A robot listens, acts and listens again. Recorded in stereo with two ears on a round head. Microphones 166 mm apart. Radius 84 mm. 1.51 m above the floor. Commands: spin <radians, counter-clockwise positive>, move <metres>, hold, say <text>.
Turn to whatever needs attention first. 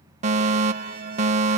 spin -0.61
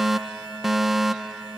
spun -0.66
say Found it: a fire alarm, straight ahead.